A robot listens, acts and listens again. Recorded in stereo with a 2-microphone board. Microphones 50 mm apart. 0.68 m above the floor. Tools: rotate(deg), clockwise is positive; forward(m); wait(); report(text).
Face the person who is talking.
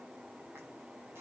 wait()
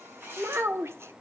rotate(70)
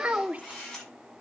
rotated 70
rotate(35)
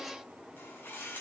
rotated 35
wait()
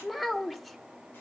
report("Facing the child speaking, 1 to 2 m away.")